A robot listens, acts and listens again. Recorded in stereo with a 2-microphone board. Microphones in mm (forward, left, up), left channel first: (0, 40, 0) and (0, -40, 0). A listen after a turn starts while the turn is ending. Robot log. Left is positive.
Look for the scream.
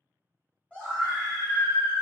cmd yaw +30
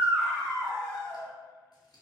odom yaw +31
note: So it is at 130° left.
cmd yaw +130
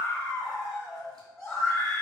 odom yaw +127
end: Found it: a scream, straight ahead.